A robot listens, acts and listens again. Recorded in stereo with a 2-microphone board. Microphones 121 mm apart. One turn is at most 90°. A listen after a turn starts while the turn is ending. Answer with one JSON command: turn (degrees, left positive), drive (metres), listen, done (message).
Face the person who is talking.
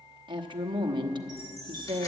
{"turn": -40}
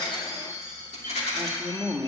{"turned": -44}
{"done": "Facing the woman speaking, 1 to 2 m away."}